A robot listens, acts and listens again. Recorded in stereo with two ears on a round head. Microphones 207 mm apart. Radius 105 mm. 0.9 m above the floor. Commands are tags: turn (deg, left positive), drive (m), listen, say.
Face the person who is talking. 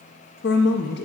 <turn deg="50"/>
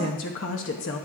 <turn deg="70"/>
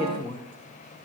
<turn deg="25"/>
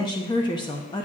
<turn deg="20"/>
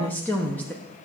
<turn deg="10"/>
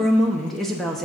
<say>Facing the woman speaking.</say>